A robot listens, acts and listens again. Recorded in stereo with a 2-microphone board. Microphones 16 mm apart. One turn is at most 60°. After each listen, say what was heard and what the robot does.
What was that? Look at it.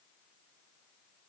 Keep listening.
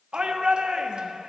The shout: about 60° right or 120° right. Turn 60° right.
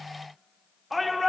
Facing the shout, 1 to 2 m away.